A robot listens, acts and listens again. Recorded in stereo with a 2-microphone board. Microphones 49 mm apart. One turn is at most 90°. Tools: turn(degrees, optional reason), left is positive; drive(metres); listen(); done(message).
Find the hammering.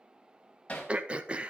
turn(degrees=25, reason="The hammering: about 25° left or 155° left.")
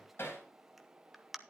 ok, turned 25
turn(degrees=90, reason="So it is at 130° left.")
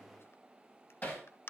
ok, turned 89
turn(degrees=40, reason="The hammering is now 40° left.")
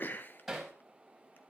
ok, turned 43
done("Facing the hammering, over 4 m away.")